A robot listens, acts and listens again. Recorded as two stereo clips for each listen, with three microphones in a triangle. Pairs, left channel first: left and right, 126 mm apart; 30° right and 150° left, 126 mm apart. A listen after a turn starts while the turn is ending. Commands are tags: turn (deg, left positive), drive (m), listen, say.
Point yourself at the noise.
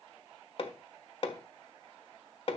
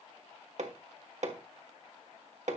<turn deg="130"/>
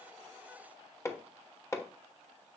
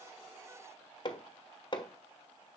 <turn deg="20"/>
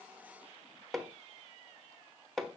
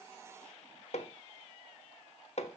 <say>Facing the hammering, 1 to 2 m away.</say>